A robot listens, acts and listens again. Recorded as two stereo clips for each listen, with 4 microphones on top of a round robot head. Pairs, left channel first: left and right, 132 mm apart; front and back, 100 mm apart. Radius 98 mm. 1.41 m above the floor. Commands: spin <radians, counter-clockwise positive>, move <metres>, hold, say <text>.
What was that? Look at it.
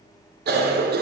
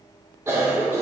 spin -1.75
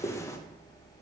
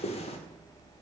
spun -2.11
spin 0.35
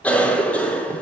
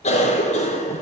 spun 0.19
spin 0.17
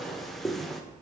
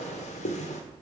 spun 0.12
say Facing the cough, 1 to 2 m away.